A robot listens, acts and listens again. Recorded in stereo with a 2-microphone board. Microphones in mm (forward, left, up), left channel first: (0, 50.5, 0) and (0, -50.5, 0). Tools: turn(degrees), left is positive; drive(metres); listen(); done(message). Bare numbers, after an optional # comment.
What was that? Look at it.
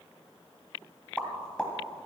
turn(30)
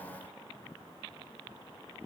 listen()
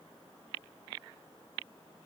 done("I heard a pop, but can't make it out now. It was about 20° right or 140° left.")